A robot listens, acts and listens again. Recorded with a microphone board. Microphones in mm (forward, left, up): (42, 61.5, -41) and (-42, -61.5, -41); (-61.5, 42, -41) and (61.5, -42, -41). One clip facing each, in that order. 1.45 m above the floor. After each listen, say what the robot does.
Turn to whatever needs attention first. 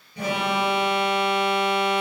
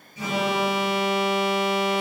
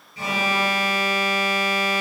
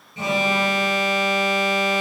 Turn 35° left.
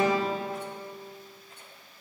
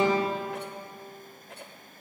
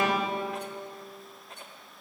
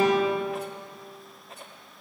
Turn 20° left.
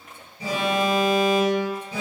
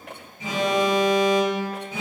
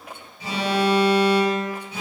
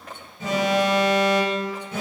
Turn 10° left.
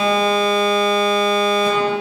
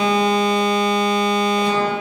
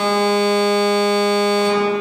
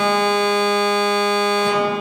Found it: an alarm, straight ahead, over 4 m away.